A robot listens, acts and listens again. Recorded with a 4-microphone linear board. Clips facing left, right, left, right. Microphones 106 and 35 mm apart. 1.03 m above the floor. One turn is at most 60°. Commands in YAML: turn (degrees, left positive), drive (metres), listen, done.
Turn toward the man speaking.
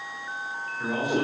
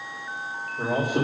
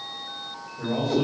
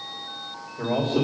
turn: -50
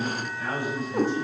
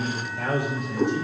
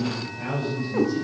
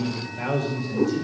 turn: -60
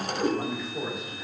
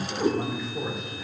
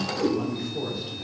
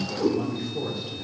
done: "Facing the man speaking, 2 to 4 m away."